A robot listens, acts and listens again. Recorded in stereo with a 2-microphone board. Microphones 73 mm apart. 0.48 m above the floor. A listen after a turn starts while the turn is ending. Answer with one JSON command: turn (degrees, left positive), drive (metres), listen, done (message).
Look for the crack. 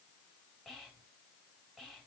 {"listen": true}
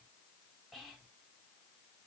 {"listen": true}
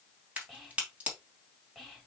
{"turn": -20}
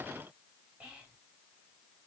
{"listen": true}
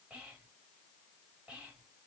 {"done": "I heard a crack, but can't make it out now. It was about straight ahead or 140° right."}